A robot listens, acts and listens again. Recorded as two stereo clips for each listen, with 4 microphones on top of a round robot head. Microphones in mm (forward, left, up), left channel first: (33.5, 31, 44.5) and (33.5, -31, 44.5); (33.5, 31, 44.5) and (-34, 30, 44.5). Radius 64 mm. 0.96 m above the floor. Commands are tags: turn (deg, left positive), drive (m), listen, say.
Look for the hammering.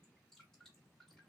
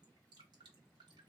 <listen/>
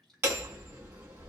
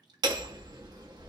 <turn deg="-150"/>
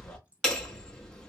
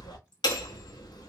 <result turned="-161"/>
<turn deg="10"/>
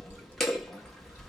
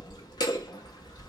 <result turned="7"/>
<say>Facing the hammering.</say>